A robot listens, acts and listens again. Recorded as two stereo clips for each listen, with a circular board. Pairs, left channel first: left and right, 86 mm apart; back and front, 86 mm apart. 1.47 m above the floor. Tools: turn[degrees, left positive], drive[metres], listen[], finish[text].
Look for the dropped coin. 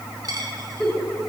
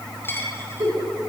Thought: The dropped coin: 125° right.
Action: turn[-125]
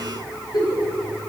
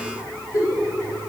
Action: finish[I heard a dropped coin from this way, but can't make it out now.]